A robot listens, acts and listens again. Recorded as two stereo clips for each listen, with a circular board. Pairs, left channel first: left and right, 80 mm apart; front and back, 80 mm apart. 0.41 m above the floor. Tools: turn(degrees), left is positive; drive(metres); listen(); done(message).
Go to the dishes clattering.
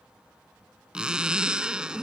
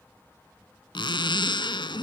listen()
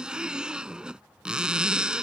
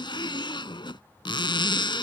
listen()
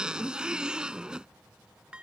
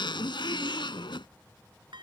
turn(degrees=-165)
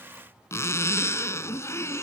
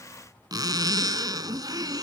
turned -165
listen()
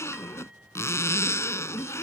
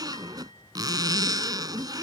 listen()
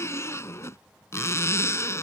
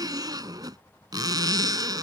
done("Facing where the dishes clattering came from. I can't hear it now. I did not reach it.")